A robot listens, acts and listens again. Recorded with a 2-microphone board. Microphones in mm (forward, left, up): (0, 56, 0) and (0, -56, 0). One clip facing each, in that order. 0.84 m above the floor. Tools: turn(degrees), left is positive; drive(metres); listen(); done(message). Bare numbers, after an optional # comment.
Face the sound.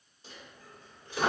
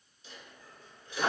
# The dropped coin: about 45° left or 135° left.
turn(45)
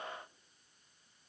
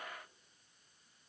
listen()
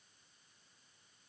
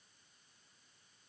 done("I heard a dropped coin, but can't make it out now. It was about straight ahead or 90° left.")